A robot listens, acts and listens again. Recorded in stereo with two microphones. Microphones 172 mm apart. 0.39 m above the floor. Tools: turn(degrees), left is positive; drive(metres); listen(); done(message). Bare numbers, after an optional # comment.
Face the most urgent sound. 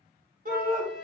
# The shout: about 55° right or 125° right.
turn(-55)
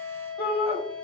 # So it is at 15° right.
turn(-15)
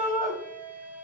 done("Found it: a shout, straight ahead, 1 to 2 m away.")